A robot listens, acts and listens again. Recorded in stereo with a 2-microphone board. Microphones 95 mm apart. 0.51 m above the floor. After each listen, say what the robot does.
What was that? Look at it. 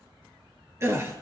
Turn 30° right.
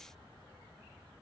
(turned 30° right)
Keep listening.
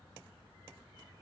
I heard a gasp, but can't make it out now. It was about straight ahead or 120° right.